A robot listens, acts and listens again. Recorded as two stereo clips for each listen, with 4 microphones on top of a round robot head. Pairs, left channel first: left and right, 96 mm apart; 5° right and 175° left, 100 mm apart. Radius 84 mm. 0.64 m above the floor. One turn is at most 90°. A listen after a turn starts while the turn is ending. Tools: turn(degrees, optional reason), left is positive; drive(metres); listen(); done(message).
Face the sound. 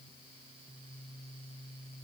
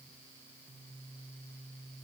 listen()
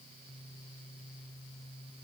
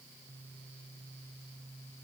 listen()
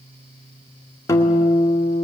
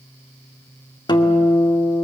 turn(degrees=30, reason="The guitar: 30° left.")
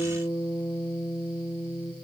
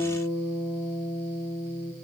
turn(degrees=10, reason="The guitar is now 10° left.")
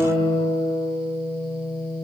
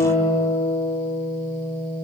done("Facing the guitar.")